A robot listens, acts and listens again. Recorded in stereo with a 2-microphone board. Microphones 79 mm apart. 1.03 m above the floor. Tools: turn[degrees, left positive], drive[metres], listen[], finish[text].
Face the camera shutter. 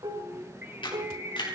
Action: turn[90]
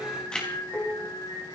Thought: So it is at 10° left.
Action: turn[10]
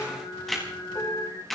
Action: finish[Found it: a camera shutter, straight ahead.]